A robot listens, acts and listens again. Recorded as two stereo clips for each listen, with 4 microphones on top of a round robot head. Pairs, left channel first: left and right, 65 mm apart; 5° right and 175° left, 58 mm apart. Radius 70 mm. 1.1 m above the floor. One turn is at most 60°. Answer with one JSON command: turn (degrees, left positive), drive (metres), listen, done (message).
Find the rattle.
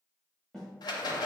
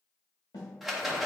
{"turn": 60}
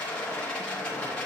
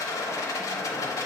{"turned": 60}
{"turn": 15}
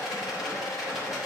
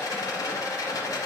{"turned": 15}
{"done": "Facing the rattle."}